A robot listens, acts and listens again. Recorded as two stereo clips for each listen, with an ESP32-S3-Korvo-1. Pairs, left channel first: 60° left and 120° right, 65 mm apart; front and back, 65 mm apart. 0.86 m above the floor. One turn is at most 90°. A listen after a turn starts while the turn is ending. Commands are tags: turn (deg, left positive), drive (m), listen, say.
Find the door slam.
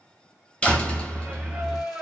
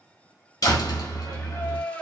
<turn deg="-10"/>
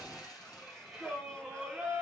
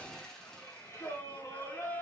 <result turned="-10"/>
<say>Facing where the door slam came from. I can't hear it now.</say>